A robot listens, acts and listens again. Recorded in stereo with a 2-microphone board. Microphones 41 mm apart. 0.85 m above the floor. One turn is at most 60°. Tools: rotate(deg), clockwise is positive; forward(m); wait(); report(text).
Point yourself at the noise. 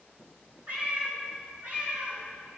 rotate(40)
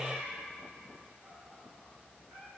rotate(60)
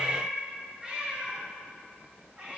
rotate(20)
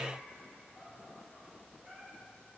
wait()
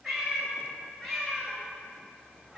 report("Found it: a cat meowing, straight ahead.")